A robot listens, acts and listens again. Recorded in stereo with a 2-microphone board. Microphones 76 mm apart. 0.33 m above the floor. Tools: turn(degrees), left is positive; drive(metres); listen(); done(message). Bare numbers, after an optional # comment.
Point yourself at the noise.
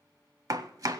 # The chopping: about 55° right or 125° right.
turn(-55)
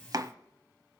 # So it is at 70° right.
turn(-70)
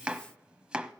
# The chopping is now 15° right.
turn(-15)
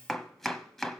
done("Found it: chopping, straight ahead, under 1 m away.")